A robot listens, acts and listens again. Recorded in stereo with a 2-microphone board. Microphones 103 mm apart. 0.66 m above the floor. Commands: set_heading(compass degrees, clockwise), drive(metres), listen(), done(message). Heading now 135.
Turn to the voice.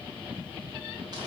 listen()
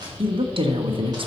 set_heading(190)
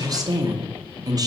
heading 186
set_heading(231)
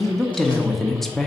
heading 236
done("Facing the woman speaking.")